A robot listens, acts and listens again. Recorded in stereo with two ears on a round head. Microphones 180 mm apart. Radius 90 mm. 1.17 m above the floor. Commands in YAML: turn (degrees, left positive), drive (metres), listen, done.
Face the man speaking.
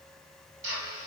listen: true
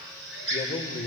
turn: 30
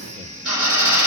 listen: true
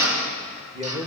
turn: -25
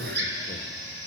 listen: true
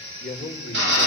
done: "Found it: a man speaking, straight ahead, 2 to 4 m away."